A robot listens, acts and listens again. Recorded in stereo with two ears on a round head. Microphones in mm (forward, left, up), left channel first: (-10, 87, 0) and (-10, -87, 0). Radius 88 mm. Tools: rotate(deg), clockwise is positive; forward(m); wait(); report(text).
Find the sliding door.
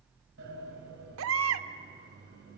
rotate(60)
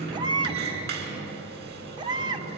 rotate(55)
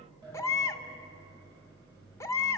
rotate(20)
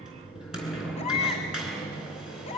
report("Found it: a sliding door, straight ahead, over 4 m away.")